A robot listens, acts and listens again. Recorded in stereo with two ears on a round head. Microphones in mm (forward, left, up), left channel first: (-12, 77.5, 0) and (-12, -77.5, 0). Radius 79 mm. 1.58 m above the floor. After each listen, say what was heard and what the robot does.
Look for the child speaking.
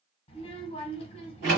The child speaking: about 35° left or 145° left. Turn 35° left.
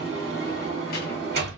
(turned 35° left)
Keep listening.
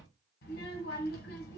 So it is at 105° left. Turn 105° left.
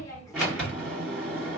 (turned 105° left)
The child speaking is now 20° left. Turn 20° left.
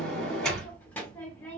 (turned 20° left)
The child speaking is now 10° left. Turn 10° left.
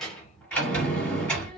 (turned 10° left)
Found it: a child speaking, straight ahead, 1 to 2 m away.